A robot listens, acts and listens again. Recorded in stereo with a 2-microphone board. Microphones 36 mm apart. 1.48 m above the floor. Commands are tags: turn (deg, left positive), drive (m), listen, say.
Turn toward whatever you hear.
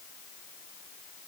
<listen/>
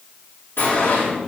<turn deg="90"/>
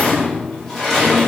<say>Facing the sliding door, over 4 m away.</say>